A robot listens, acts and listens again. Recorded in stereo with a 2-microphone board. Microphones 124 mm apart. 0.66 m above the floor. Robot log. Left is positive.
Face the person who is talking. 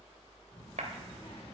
note: The child speaking: about 45° left or 135° left.
cmd yaw +45
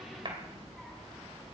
end: Found it: a child speaking, straight ahead.